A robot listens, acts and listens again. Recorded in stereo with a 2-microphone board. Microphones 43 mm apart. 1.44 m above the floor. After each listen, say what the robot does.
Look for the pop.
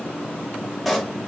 Turn 30° right.
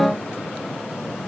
Keep listening.
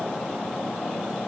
I heard a pop, but can't make it out now. It was about 25° left or 145° right.